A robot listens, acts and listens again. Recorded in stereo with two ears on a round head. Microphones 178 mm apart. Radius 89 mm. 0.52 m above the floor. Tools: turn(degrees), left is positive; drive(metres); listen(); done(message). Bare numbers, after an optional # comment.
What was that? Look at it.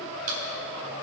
# The chewing: about 45° right or 135° right.
turn(-45)
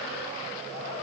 listen()
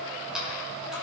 done("Found it: chewing, straight ahead, 2 to 4 m away.")